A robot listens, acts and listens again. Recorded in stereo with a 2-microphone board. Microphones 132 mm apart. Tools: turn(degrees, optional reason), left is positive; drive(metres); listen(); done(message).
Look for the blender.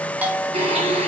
turn(degrees=-45, reason="The blender: about 45° right or 135° right.")
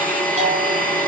turn(degrees=-85, reason="So it is at 85° right.")
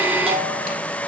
turn(degrees=-15, reason="The blender is now 15° right.")
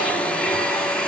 done("Found it: a blender, straight ahead.")